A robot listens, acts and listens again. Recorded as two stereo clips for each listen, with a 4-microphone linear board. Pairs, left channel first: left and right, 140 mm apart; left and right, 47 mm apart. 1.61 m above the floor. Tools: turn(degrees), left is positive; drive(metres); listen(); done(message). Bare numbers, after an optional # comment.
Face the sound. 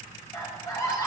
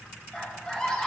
# The scream: about 25° left or 155° left.
turn(25)
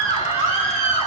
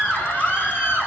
# So it is at 135° left.
turn(135)
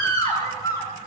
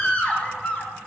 # The scream is now 25° left.
turn(25)
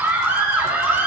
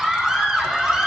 # The scream is now 15° right.
turn(-15)
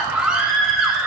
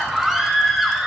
done("Found it: a scream, straight ahead.")